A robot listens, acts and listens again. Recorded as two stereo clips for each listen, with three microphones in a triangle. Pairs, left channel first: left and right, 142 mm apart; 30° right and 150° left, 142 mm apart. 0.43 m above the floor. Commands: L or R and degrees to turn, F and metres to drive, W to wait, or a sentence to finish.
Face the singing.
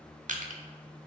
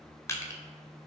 W
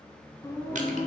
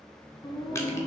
L25
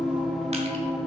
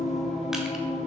Found it: singing, straight ahead.